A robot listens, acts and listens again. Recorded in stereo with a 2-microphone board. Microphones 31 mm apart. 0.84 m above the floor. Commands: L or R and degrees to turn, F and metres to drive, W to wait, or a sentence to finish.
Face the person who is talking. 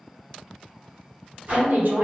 R65
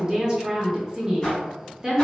R20
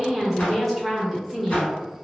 Found it: a woman speaking, straight ahead.